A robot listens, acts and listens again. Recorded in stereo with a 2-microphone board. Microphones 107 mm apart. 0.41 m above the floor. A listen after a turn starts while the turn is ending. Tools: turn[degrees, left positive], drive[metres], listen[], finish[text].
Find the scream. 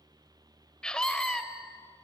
Action: turn[30]
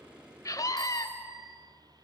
Thought: So it is at 140° left.
Action: turn[140]
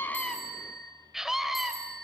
Action: finish[Facing the scream, 1 to 2 m away.]